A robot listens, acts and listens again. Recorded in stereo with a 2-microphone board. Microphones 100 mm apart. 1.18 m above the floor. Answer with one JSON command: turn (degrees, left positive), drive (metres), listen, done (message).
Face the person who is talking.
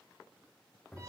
{"listen": true}
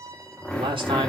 {"turn": -60}
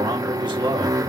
{"turn": -55}
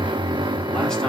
{"listen": true}
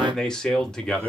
{"done": "Found it: a man speaking, straight ahead."}